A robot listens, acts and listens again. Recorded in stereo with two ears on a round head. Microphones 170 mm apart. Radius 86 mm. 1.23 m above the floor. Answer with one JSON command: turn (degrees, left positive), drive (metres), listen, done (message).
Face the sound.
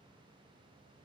{"listen": true}
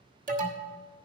{"turn": -45}
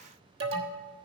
{"turn": -85}
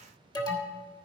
{"turn": 20}
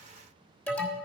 {"turn": 10}
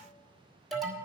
{"done": "Facing the alarm."}